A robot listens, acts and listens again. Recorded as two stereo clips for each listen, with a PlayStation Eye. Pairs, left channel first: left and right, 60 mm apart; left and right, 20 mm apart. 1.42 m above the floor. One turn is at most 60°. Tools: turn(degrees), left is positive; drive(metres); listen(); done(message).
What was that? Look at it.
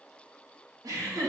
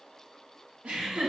turn(degrees=-60)
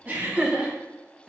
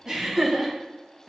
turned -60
turn(degrees=-15)
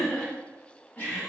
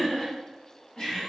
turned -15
turn(degrees=30)
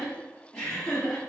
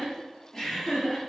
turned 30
turn(degrees=25)
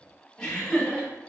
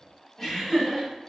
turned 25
turn(degrees=15)
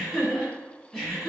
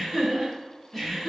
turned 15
done("Facing the laughter, 2 to 4 m away.")